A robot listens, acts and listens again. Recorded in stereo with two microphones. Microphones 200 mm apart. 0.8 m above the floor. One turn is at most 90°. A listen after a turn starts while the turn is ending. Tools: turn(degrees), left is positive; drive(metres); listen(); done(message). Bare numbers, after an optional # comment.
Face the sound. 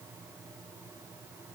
listen()
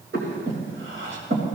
turn(-90)
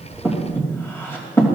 # So it is at 10° left.
turn(10)
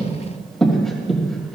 done("Found it: breathing, straight ahead.")